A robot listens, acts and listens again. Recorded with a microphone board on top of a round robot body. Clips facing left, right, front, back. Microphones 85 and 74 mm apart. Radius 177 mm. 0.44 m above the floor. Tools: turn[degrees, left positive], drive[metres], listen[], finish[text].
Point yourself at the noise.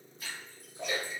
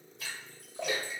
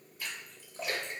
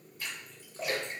Thought: The splash: 90° right.
Action: turn[-90]
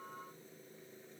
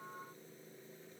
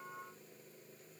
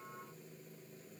Action: finish[Facing where the splash came from. I can't hear it now.]